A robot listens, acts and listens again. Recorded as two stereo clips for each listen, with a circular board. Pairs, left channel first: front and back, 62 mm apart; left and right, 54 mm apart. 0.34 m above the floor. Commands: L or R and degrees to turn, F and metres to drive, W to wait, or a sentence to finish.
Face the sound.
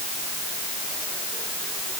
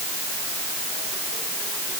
W
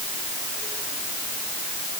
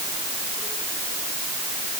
W
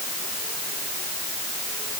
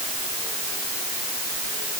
I can't make out anything.